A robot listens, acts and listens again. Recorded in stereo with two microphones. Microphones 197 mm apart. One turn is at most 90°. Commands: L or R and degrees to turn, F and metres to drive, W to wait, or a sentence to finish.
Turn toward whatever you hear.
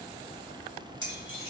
L90
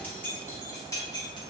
L20
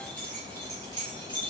L25
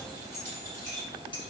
L20
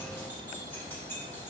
W
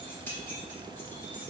L10
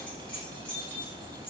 Found it: keys jangling, straight ahead, 1 to 2 m away.